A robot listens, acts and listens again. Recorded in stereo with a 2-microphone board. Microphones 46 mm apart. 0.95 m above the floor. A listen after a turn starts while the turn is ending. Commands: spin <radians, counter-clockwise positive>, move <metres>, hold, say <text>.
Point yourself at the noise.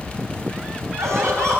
spin -1.57
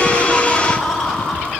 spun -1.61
say Facing the laughter.